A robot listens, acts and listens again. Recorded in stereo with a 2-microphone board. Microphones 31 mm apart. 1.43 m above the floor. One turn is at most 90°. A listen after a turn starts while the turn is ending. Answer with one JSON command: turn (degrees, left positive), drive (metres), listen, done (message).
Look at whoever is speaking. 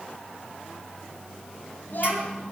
{"turn": 90}
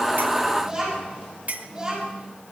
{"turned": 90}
{"turn": -10}
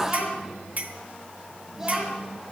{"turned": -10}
{"done": "Facing the child speaking."}